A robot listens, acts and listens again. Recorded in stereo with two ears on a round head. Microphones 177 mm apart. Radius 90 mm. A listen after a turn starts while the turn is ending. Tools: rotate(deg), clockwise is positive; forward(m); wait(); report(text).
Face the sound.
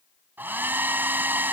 rotate(30)
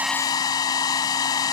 rotate(-20)
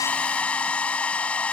report("Facing the hair dryer.")